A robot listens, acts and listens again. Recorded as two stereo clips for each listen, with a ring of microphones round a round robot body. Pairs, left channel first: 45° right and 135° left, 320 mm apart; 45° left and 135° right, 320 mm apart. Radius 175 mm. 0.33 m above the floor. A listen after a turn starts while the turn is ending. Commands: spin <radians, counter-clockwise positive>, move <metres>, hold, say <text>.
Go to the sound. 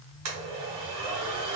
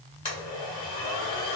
spin 2.09
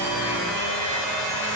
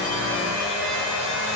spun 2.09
spin -0.17
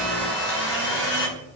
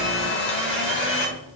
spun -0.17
move 1.0
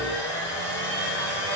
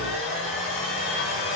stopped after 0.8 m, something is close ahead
say Arrived at the blender, straight ahead.